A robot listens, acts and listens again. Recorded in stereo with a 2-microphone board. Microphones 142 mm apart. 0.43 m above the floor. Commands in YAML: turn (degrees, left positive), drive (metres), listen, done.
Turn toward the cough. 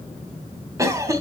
turn: -25
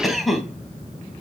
done: "Facing the cough."